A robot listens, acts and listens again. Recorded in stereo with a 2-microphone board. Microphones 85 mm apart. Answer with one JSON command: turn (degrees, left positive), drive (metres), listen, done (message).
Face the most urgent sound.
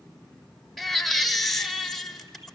{"turn": 30}
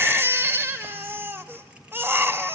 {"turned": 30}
{"turn": -25}
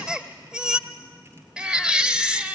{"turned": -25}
{"turn": -10}
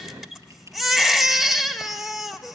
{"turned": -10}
{"done": "Facing the baby crying."}